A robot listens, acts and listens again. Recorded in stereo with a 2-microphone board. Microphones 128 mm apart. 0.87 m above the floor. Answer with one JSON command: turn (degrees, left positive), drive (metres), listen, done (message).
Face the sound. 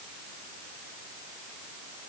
{"listen": true}
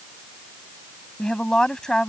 {"turn": 30}
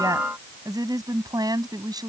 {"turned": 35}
{"turn": -30}
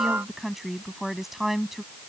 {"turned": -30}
{"done": "Found it: a woman speaking, straight ahead."}